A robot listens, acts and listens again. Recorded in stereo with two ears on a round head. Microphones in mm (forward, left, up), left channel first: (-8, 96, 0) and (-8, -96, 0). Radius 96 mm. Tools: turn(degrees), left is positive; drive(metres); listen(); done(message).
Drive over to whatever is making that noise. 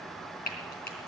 turn(degrees=45)
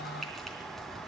listen()
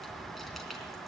listen()
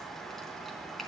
done("I heard frying, but can't make it out now. It was about straight ahead or 90° left. I did not reach it.")